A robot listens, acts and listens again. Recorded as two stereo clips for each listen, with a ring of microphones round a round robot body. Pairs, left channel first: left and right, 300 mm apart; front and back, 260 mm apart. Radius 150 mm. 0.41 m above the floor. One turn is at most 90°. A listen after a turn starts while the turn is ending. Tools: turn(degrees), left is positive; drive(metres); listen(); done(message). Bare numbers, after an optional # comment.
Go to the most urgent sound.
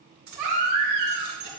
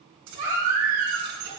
# The baby crying: 115° right.
turn(-90)
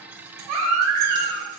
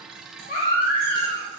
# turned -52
# The baby crying is now 65° right.
turn(-65)
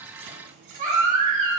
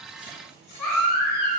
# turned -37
# The baby crying is now 25° right.
turn(-25)
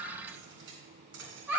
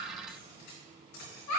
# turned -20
drive(1.0)
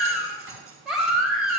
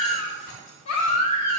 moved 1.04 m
drive(1.0)
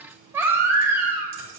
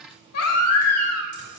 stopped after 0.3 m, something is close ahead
# The baby crying is now 10° right.
turn(-10)
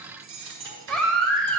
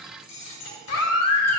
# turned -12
done("Arrived at the baby crying, straight ahead.")